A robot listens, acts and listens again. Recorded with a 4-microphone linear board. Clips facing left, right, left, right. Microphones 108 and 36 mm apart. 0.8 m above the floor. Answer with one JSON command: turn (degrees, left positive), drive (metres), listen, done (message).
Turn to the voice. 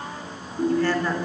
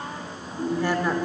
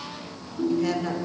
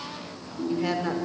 {"turn": -15}
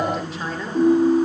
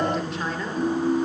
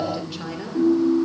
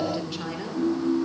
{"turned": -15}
{"done": "Found it: a woman speaking, straight ahead, 2 to 4 m away."}